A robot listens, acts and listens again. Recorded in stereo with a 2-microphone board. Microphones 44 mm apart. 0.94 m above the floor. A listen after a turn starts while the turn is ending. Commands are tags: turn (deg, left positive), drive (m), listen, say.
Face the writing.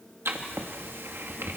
<turn deg="-65"/>
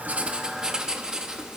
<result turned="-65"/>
<turn deg="-15"/>
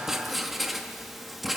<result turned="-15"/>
<say>Found it: writing, straight ahead.</say>